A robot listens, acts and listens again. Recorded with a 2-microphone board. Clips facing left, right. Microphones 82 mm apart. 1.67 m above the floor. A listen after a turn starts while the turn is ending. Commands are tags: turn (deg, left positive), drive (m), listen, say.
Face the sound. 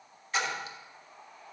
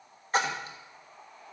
<turn deg="-40"/>
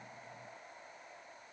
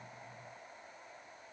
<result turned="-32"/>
<listen/>
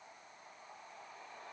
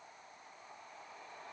<say>I heard a splash, but can't make it out now. It was about 5° right or 110° right.</say>